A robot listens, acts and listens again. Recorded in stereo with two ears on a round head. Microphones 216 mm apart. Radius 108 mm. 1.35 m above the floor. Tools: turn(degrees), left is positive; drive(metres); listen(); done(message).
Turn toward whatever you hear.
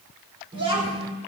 turn(degrees=-25)
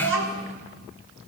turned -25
turn(degrees=-125)
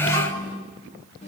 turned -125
turn(degrees=25)
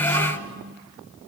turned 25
turn(degrees=15)
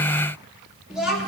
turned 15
done("Found it: a child speaking, straight ahead.")